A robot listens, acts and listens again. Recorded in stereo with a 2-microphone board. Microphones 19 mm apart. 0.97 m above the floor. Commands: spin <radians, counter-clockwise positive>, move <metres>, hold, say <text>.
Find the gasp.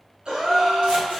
spin -0.87
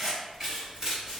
hold
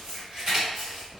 say I heard a gasp, but can't make it out now. It was about straight ahead or 80° right.